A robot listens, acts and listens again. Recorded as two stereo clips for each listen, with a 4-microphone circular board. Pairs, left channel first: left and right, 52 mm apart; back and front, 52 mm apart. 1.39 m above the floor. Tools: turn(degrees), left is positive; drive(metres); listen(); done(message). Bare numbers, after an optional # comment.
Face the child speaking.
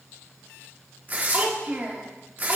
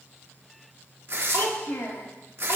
# The child speaking: 145° right.
turn(-145)
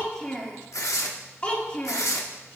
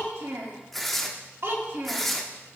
# The child speaking is now 30° left.
turn(30)
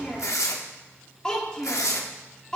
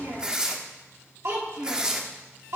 # The child speaking is now 15° left.
turn(15)
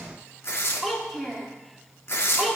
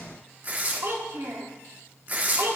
done("Facing the child speaking.")